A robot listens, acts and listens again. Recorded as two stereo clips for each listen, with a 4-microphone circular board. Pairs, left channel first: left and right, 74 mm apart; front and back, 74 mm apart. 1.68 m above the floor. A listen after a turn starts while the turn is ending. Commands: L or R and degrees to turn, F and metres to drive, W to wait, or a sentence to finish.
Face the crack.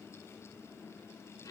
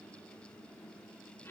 W
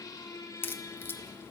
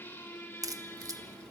L150
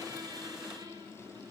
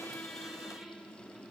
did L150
Facing where the crack came from. I can't hear it now.